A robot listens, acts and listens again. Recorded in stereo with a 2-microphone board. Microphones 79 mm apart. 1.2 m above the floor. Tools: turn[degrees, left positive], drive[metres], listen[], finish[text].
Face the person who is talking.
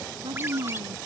Action: turn[-90]
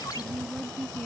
Thought: So it is at 10° left.
Action: turn[10]
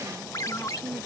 Action: finish[Found it: a woman speaking, straight ahead.]